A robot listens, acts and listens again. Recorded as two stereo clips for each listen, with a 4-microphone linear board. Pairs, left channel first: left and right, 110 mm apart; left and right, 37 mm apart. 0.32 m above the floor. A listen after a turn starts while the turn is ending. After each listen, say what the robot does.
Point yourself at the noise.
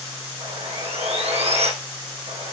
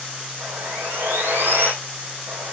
Turn 90° right.
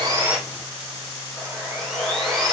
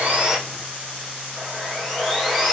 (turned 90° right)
Facing the sawing, 2 to 4 m away.